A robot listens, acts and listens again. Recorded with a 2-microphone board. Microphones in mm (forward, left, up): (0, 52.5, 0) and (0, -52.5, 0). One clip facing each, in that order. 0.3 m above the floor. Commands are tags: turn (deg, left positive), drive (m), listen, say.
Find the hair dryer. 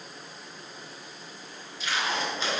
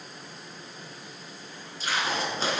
<listen/>
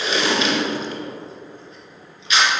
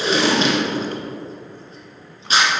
<listen/>
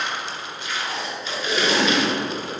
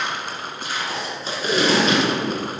<say>I can't make out a hair dryer, only crushing and tape being pulled.</say>